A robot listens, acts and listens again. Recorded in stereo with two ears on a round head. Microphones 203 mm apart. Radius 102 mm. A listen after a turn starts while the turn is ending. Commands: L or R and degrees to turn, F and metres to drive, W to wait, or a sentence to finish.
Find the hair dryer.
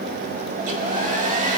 R35
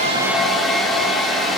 Found it: a hair dryer, straight ahead, 1 to 2 m away.